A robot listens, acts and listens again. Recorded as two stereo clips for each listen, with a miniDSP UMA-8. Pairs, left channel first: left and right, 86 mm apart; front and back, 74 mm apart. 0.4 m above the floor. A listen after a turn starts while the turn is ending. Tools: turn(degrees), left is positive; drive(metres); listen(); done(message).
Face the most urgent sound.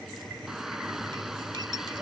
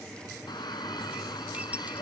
done("Facing the shout.")